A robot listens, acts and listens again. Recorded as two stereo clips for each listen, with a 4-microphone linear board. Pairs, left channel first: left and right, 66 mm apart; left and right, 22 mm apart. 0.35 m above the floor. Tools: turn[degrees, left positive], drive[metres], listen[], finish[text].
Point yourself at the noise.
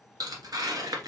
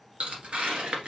Thought: The tearing paper: about 70° right or 110° right.
Action: turn[-70]
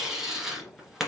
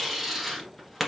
Action: finish[Facing the tearing paper.]